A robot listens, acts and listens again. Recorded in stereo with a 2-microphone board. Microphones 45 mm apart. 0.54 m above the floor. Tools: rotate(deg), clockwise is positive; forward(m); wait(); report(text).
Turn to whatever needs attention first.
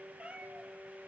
wait()
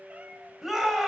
rotate(30)
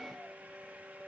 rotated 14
wait()
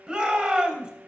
rotate(160)
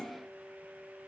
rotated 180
rotate(-20)
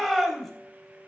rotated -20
report("Found it: a shout, straight ahead, 2 to 4 m away.")